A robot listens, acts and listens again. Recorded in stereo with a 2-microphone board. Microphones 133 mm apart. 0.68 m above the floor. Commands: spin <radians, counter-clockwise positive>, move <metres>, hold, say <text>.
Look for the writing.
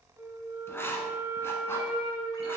spin 0.35
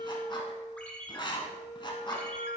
spin 2.44
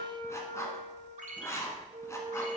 spin 0.44
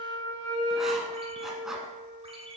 hold
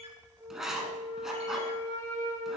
say Facing the writing, 1 to 2 m away.